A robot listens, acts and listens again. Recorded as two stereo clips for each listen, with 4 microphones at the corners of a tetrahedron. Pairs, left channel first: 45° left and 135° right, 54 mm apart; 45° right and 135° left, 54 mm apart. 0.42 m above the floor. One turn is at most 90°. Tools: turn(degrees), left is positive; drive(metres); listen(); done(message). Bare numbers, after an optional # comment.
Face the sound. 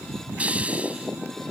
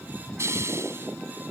# The hiss: 160° left.
turn(90)
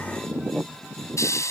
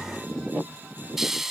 # The hiss is now 50° left.
turn(50)
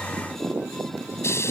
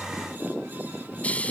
# The hiss is now 20° left.
turn(20)
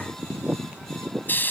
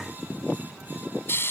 done("Found it: a hiss, straight ahead.")